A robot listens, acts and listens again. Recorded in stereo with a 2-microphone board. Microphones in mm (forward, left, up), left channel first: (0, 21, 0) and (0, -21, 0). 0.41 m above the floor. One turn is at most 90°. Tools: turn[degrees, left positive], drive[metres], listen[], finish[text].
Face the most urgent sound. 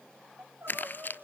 Thought: The crying: about 70° right or 110° right.
Action: turn[-70]
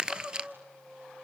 Thought: So it is at 40° right.
Action: turn[-40]
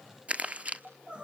Thought: The crying is now 30° right.
Action: turn[-30]
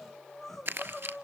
Action: finish[Facing the crying.]